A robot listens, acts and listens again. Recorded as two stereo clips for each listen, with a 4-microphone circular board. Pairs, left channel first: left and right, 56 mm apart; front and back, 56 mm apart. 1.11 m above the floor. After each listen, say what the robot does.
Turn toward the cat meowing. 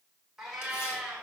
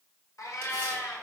Turn 10° right.
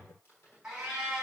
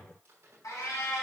Turn 15° right.
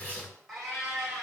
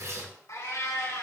Facing the cat meowing, 2 to 4 m away.